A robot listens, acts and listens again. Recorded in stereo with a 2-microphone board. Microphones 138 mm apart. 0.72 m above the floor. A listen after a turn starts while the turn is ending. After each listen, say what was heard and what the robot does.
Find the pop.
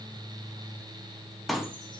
Turn 30° left.
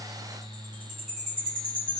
Keep listening.
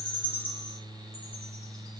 I heard a pop, but can't make it out now. It was about 30° right or 150° left.